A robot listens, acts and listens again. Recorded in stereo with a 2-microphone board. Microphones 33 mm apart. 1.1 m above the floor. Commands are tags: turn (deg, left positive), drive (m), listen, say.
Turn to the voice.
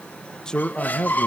<turn deg="20"/>
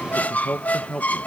<turn deg="135"/>
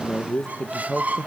<turn deg="10"/>
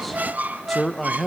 <say>Facing the man speaking, 1 to 2 m away.</say>